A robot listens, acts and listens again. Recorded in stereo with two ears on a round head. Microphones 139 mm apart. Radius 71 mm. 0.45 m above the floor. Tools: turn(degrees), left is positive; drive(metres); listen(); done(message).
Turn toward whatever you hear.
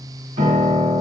turn(degrees=-35)
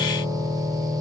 turn(degrees=-10)
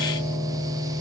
done("Found it: a piano, straight ahead, 1 to 2 m away.")